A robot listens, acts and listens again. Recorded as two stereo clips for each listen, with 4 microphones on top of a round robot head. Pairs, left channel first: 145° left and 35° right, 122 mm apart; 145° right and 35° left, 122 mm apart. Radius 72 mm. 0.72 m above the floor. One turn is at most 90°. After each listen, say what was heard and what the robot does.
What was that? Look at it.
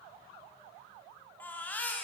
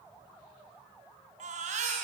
The baby crying: 65° left. Turn 65° left.
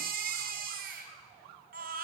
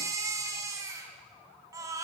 The baby crying is now 30° right. Turn 30° right.
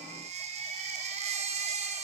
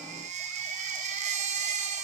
Found it: a baby crying, straight ahead.